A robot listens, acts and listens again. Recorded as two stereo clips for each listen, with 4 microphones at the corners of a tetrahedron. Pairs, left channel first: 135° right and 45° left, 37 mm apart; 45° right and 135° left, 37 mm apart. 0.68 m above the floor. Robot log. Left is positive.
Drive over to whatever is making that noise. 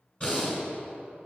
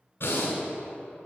note: The breathing: 70° right.
cmd yaw -70
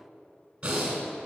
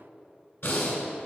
note: The breathing is now 20° right.
cmd yaw -20
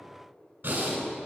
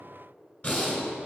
cmd fwd 1.0
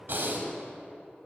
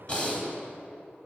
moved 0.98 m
note: The breathing is now 10° left.
cmd yaw +10
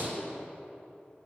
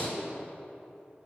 cmd fwd 1.0
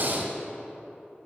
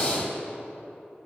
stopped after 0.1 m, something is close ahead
end: I am next to the breathing.